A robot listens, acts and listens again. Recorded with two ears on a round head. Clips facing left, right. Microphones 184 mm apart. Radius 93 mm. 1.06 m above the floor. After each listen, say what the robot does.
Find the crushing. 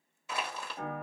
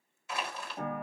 Turn 75° left.
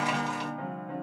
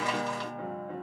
Keep listening.
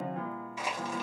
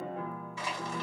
Turn 15° left.
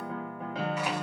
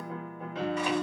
Keep listening.
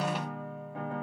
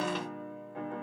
Keep listening.
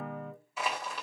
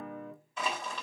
Facing the crushing.